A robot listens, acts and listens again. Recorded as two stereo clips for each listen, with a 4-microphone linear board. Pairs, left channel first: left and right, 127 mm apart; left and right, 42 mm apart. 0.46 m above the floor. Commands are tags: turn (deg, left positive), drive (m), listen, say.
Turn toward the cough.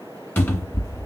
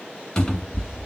<listen/>
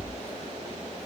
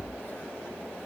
<listen/>
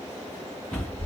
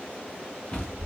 <say>I can't make out a cough to turn to.</say>